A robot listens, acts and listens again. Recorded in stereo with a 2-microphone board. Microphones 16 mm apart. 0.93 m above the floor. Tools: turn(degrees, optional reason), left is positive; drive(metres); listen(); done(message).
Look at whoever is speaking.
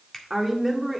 turn(degrees=-30)
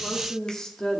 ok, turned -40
turn(degrees=50, reason="So it is at 50° left.")
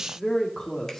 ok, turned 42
turn(degrees=40, reason="The woman speaking is now 40° left.")
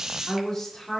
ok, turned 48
turn(degrees=20, reason="The woman speaking is now 20° left.")
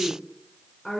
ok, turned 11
turn(degrees=20, reason="The woman speaking is now 20° left.")
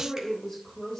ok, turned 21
done("Found it: a woman speaking, straight ahead.")